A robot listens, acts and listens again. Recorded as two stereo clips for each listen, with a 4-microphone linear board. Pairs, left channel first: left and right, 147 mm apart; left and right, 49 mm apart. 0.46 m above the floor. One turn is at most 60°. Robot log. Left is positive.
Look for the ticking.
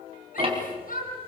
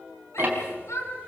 note: The ticking: about 40° right or 140° right.
cmd yaw -40
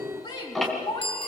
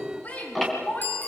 end: Found it: ticking, straight ahead.